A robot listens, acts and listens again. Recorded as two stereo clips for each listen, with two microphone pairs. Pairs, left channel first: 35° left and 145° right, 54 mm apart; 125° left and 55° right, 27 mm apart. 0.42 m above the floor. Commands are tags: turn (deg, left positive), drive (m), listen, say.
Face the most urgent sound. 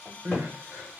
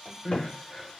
<turn deg="180"/>
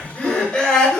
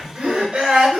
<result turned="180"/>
<turn deg="-40"/>
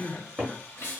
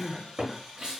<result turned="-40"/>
<say>Facing the crying.</say>